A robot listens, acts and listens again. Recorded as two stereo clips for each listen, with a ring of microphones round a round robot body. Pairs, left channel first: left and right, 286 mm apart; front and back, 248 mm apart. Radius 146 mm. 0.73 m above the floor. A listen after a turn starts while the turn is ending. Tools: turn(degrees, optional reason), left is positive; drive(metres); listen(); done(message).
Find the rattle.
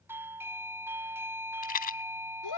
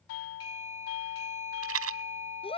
turn(degrees=150, reason="The rattle: 150° left.")
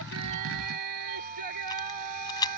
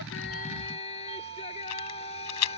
turn(degrees=15, reason="The rattle is now 15° left.")
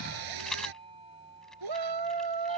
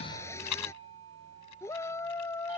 done("Found it: a rattle, straight ahead.")